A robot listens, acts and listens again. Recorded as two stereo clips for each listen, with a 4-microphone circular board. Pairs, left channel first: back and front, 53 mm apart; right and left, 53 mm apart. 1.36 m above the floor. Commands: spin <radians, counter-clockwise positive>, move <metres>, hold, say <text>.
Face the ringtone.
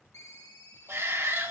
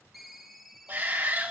spin 3.14
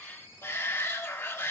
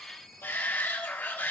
say Facing the ringtone.